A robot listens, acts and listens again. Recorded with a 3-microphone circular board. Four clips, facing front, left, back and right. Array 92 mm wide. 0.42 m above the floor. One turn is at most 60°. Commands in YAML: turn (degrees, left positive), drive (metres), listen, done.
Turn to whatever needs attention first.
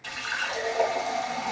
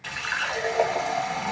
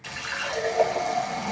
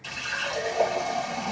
listen: true
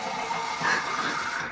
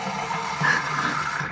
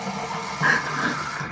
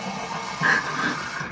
turn: -60
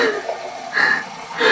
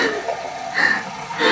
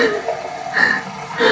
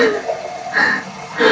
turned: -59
turn: -60
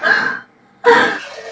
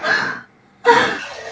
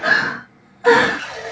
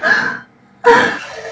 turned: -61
turn: -55
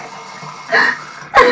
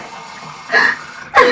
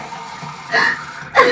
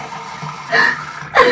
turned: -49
done: "Found it: crying, straight ahead, 1 to 2 m away."